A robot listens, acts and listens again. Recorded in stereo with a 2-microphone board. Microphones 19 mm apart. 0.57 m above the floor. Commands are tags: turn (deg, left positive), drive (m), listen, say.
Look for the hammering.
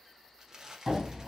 <turn deg="-35"/>
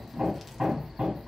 <turn deg="-110"/>
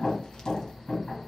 <turn deg="25"/>
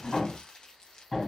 <turn deg="20"/>
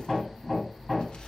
<say>Facing the hammering.</say>